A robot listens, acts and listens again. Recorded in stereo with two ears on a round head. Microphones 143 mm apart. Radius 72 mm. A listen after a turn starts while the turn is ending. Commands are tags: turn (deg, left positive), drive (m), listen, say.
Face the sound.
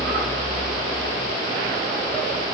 <listen/>
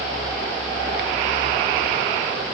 <listen/>
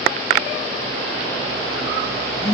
<turn deg="90"/>
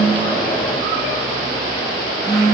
<say>Found it: a phone buzzing, straight ahead.</say>